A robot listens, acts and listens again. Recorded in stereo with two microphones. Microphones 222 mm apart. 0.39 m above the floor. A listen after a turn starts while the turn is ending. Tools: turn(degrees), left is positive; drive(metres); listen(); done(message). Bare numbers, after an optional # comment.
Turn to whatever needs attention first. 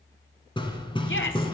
# The shout: about 60° left or 120° left.
turn(60)
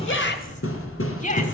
# So it is at 40° left.
turn(40)
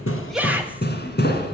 # The shout is now 10° right.
turn(-10)
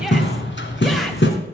listen()
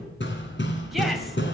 listen()
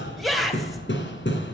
done("Found it: a shout, straight ahead, 2 to 4 m away.")